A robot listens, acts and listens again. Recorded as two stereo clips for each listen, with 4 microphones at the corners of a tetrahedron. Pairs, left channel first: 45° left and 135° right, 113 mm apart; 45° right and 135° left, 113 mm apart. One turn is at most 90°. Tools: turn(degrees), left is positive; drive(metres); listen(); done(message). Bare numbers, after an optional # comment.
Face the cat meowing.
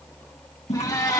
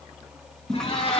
# The cat meowing: 15° right.
turn(-15)
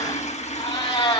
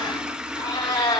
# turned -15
done("Found it: a cat meowing, straight ahead, over 4 m away.")